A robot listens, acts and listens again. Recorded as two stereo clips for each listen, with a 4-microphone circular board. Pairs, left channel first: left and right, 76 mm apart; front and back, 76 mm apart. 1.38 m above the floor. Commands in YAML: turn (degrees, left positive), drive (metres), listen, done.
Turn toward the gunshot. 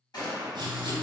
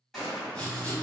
turn: 85
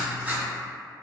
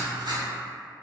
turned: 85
done: "Facing where the gunshot came from. I can't hear it now."